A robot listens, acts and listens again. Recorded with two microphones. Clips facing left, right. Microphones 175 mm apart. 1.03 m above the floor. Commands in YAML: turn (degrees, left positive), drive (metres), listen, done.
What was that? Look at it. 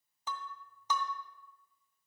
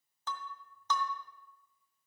turn: 30
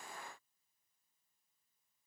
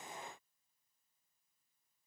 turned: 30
listen: true
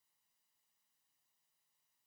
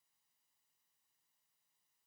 done: "I heard breaking glass, but can't make it out now. It was about 15° right or 135° left."